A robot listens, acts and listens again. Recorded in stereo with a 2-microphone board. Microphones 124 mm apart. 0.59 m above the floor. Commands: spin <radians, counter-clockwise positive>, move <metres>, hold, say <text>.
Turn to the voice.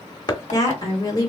spin 0.52
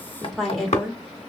say Facing the woman speaking.